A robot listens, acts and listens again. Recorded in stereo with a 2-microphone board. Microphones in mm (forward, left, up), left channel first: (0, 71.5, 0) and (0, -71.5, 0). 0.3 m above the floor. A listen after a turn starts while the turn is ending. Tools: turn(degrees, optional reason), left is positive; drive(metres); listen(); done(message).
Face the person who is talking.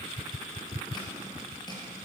listen()
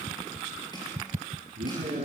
turn(degrees=-70, reason="The man speaking: about 70° right or 110° right.")
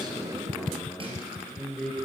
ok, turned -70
done("Found it: a man speaking, straight ahead.")